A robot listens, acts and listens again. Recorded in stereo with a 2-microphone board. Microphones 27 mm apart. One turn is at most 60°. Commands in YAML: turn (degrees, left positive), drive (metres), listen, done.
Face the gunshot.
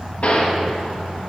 turn: 50
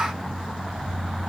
listen: true
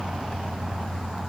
done: "I heard a gunshot, but can't make it out now. It was about straight ahead or 80° left."